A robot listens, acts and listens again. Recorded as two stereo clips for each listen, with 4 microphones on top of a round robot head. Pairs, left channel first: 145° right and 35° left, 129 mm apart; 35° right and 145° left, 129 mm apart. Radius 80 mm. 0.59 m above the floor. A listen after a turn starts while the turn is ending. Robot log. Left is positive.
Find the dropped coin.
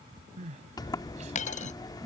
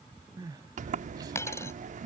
note: The dropped coin: 110° right.
cmd yaw -110
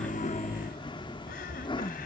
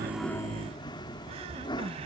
end: Facing where the dropped coin came from. I can't hear it now.